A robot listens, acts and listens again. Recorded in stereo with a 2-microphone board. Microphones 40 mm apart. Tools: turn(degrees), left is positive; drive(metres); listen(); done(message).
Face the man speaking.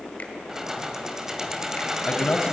turn(degrees=35)
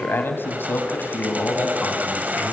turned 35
turn(degrees=105)
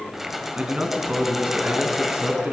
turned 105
turn(degrees=-35)
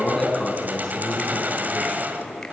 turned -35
turn(degrees=10)
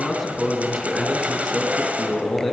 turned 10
done("Facing the man speaking.")